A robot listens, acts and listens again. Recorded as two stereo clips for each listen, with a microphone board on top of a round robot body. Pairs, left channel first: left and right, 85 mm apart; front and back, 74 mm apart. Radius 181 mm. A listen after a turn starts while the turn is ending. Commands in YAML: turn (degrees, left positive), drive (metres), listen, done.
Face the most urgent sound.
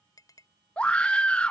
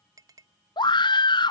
turn: 10
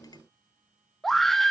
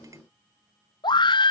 done: "Facing the scream."